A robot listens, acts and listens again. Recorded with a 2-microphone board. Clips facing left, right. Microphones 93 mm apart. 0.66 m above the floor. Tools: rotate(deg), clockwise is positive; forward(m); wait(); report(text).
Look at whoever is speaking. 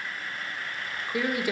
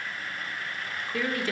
rotate(-30)
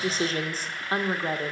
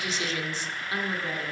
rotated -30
rotate(-135)
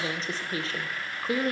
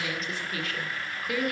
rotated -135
rotate(-35)
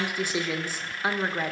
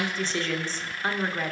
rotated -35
rotate(-10)
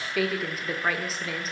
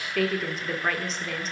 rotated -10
report("Facing the woman speaking, 1 to 2 m away.")